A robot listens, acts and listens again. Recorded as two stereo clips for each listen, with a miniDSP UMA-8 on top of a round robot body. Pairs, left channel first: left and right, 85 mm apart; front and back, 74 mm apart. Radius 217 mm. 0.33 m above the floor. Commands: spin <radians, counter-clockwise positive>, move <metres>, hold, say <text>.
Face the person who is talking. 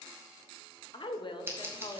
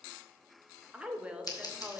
spin 1.83
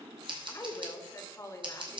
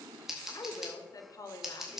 spin 0.61
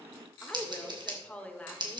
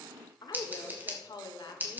spin 0.26
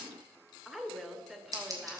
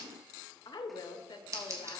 say Found it: a woman speaking, straight ahead, 1 to 2 m away.